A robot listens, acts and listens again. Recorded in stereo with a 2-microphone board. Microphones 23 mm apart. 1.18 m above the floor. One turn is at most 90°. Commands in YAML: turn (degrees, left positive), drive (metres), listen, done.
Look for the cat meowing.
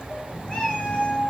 turn: 45
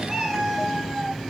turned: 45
done: "Found it: a cat meowing, straight ahead, over 4 m away."